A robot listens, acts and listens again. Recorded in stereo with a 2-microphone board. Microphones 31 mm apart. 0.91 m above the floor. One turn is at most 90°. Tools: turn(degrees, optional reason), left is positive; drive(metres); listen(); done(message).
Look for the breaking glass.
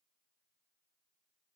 listen()
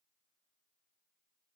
listen()
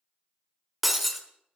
turn(degrees=30)
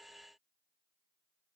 listen()
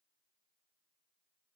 done("I heard breaking glass, but can't make it out now. It was about 30° right or 150° left.")